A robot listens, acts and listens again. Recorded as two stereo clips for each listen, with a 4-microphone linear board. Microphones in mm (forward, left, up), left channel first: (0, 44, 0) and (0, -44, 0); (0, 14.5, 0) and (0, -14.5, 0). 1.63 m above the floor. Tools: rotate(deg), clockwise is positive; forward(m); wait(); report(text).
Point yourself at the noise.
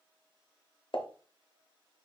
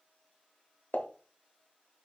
rotate(-90)
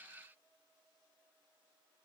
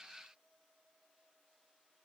report("I heard a pop from this way, but can't make it out now.")